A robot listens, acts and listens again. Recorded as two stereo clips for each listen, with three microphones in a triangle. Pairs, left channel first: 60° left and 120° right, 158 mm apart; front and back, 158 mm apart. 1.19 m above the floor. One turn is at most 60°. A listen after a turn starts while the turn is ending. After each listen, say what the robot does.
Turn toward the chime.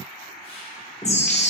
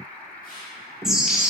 Turn 60° left.
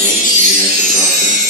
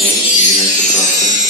Turn 30° left.
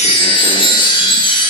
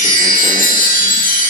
Found it: a chime, straight ahead.